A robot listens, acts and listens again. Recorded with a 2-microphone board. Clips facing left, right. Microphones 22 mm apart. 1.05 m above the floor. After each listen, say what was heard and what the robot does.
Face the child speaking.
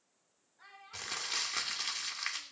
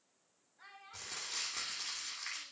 Turn 30° right.
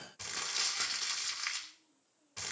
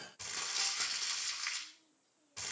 Keep listening.
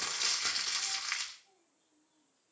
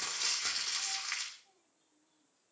Keep listening.
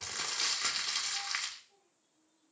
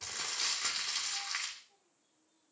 Turn 30° right.
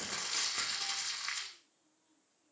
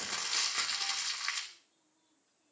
Keep listening.
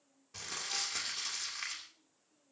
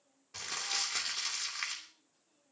So it is at 145° right. Turn 145° right.
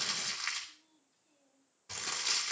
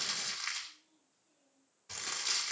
The child speaking is now 25° left. Turn 25° left.
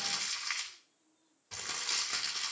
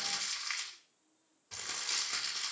Keep listening.
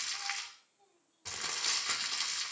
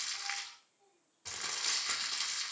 The child speaking is now 25° left. Turn 25° left.
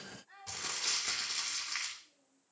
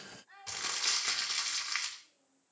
Facing the child speaking, over 4 m away.